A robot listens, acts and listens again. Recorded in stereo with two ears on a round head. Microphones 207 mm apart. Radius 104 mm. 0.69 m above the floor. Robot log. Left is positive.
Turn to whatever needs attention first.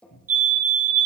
note: The fire alarm: about 35° right or 145° right.
cmd yaw -35
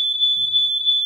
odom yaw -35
end: Found it: a fire alarm, straight ahead, over 4 m away.